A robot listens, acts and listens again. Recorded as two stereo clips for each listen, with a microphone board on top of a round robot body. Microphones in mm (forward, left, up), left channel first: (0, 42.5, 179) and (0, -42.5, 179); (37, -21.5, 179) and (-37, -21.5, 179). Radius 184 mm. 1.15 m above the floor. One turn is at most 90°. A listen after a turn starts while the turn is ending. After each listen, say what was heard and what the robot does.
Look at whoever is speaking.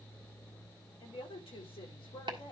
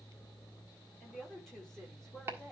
The woman speaking: 85° left. Turn 85° left.
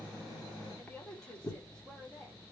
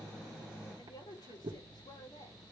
The woman speaking is now 10° left. Turn 10° left.
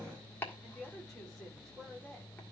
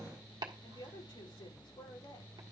Facing the woman speaking, over 4 m away.